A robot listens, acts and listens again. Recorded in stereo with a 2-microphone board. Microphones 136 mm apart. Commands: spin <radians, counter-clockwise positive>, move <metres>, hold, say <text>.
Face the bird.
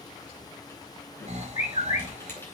spin 1.13
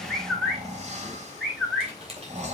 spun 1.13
say Found it: a bird, straight ahead, 2 to 4 m away.